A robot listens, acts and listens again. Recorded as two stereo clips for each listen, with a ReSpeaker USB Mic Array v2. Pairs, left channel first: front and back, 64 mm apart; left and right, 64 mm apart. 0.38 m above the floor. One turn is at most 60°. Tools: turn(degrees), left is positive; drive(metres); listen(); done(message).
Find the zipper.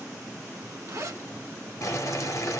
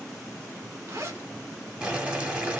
turn(degrees=-60)
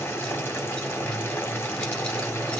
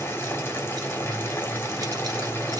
turn(degrees=-60)
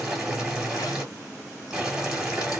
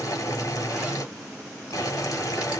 turn(degrees=-20)
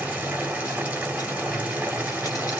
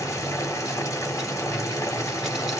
done("I heard a zipper from this way, but can't make it out now.")